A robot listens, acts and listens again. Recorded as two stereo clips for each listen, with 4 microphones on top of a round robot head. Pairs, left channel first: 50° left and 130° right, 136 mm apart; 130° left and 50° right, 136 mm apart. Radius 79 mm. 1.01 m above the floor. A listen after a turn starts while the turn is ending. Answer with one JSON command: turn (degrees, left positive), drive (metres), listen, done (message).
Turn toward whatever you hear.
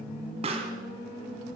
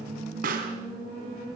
{"turn": -80}
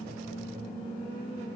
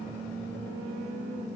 {"done": "I heard a pop from this way, but can't make it out now."}